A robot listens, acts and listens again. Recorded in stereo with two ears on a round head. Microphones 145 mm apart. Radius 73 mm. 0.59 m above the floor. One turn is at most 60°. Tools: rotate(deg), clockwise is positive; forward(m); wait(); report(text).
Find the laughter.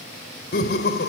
rotate(-60)
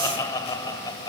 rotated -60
rotate(-25)
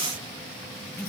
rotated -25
report("Facing the laughter.")